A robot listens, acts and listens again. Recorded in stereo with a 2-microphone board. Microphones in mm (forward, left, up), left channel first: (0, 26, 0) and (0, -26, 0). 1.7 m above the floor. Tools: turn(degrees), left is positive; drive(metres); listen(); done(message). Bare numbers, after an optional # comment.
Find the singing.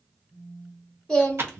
# The singing: about 15° left or 165° left.
turn(15)
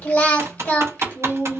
# So it is at 150° left.
turn(150)
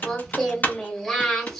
done("Facing the singing.")